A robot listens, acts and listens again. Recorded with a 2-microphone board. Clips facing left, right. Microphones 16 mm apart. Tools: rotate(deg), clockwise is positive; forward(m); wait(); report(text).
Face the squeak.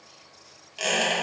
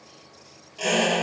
rotate(-40)
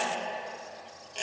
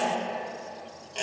report("Found it: a squeak, straight ahead, 1 to 2 m away.")